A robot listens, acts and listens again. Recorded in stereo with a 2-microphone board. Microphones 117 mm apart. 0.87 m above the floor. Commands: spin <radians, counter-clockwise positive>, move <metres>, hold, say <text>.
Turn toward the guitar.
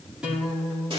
spin -0.52
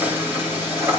hold
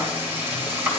hold
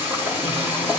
say I heard a guitar, but can't make it out now. It was about 20° left or 140° right.